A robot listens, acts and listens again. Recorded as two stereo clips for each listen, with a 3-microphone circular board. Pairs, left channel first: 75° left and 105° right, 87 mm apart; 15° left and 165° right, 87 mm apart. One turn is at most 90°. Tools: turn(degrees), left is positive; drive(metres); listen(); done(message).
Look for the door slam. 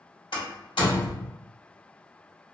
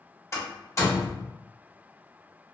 turn(degrees=70)
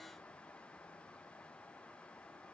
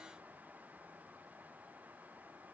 done("Facing where the door slam came from. I can't hear it now.")